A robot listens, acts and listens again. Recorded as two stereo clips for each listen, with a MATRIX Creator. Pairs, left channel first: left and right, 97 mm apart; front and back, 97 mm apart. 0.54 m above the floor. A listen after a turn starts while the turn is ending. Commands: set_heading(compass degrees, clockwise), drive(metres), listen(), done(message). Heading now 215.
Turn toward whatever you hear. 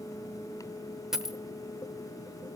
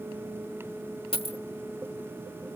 done("Found it: a dropped coin, straight ahead, under 1 m away.")